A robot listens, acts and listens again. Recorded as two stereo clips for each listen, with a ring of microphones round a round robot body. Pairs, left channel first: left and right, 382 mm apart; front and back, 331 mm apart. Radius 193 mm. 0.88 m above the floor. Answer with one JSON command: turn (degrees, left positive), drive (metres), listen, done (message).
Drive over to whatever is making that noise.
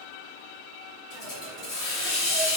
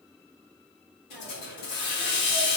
{"turn": 10}
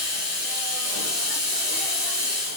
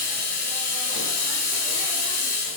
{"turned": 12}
{"drive": 1.0}
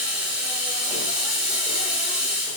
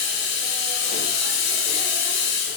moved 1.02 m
{"drive": 1.0}
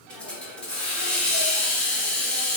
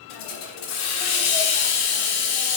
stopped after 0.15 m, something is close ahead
{"done": "I am next to the hiss."}